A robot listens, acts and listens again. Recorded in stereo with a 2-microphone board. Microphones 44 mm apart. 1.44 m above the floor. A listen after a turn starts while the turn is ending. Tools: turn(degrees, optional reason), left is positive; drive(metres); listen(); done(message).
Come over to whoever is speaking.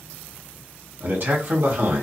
turn(degrees=-55, reason="The man speaking: about 55° right or 125° right.")
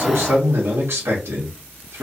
turn(degrees=-70, reason="So it is at 70° right.")
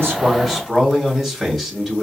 drive(metres=1.0)
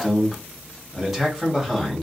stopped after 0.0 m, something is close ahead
done("Blocked. The man speaking is further on, straight ahead.")